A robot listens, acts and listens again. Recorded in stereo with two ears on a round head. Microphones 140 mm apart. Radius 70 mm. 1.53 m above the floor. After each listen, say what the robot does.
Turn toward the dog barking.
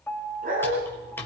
Turn 60° right.
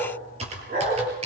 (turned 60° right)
Turn 60° right.
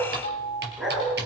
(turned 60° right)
Facing the dog barking, over 4 m away.